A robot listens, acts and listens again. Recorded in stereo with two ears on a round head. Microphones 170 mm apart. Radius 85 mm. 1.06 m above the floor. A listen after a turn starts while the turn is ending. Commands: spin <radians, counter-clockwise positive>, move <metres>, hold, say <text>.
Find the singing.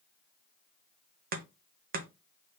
hold
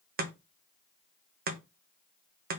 hold
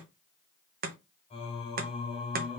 spin 0.52
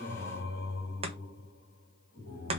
spin 2.09
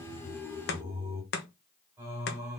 spin -0.26
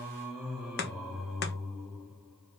say Facing the singing.